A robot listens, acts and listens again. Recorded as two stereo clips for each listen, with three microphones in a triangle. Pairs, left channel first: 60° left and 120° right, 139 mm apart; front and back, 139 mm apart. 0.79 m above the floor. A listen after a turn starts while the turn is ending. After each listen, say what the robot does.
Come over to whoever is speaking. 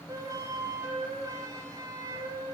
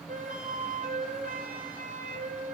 Keep listening.
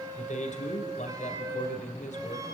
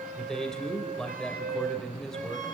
Turn 85° left.
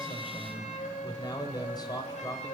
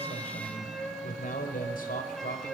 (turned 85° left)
Drive 1.0 m forward.
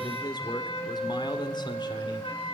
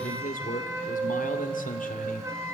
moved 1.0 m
Drive 1.0 m forward.
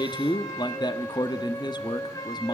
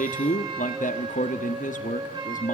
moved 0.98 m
Drive 1.0 m forward.
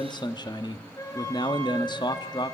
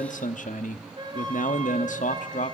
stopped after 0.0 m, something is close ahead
Arrived at the man speaking, straight ahead.